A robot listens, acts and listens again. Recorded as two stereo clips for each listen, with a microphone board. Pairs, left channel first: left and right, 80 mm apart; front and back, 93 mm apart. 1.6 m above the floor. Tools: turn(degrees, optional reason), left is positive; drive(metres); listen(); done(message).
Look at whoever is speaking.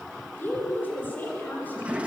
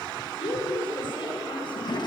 turn(degrees=20, reason="The woman speaking: 20° left.")
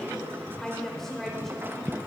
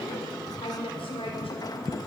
done("Found it: a woman speaking, straight ahead, over 4 m away.")